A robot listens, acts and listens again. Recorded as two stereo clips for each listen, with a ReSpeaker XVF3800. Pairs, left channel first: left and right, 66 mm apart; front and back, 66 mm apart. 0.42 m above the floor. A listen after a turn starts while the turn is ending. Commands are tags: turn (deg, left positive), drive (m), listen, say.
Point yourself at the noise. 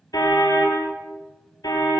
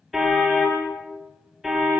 <turn deg="95"/>
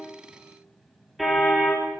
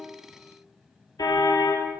<say>Facing the car horn, over 4 m away.</say>